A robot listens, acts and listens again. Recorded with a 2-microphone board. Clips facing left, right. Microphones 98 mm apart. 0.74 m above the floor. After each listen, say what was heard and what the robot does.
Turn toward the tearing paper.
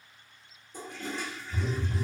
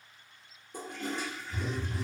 Keep listening.
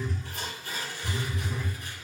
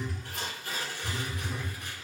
The tearing paper: about 60° right or 120° right. Turn 60° right.
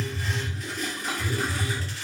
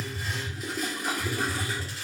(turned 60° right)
Keep listening.
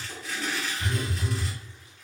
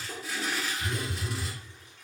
So it is at 10° right. Turn 10° right.
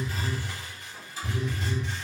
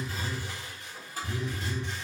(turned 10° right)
Found it: tearing paper, straight ahead, 1 to 2 m away.